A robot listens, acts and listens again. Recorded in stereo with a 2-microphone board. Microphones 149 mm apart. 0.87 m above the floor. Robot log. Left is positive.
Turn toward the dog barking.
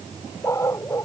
note: The dog barking: about 20° left or 160° left.
cmd yaw +20
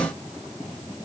cmd idle
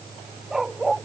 end: Facing the dog barking.